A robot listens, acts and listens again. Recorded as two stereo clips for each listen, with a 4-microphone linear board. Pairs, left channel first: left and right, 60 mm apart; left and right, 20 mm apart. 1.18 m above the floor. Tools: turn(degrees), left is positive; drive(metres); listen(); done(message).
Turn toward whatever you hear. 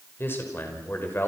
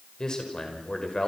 turn(degrees=35)
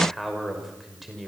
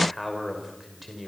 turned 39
done("Facing the man speaking, over 4 m away.")